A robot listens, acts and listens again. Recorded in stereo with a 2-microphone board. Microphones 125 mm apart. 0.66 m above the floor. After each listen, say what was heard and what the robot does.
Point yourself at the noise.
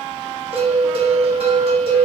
The bell: about 50° right or 130° right. Turn 50° right.
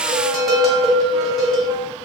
Found it: a bell, straight ahead.